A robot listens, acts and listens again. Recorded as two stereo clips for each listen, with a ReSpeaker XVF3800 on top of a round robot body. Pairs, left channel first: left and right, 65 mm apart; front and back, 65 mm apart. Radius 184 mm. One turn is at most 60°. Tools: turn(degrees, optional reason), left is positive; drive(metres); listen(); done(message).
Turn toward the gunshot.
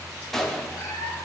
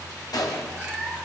done("Facing the gunshot, 2 to 4 m away.")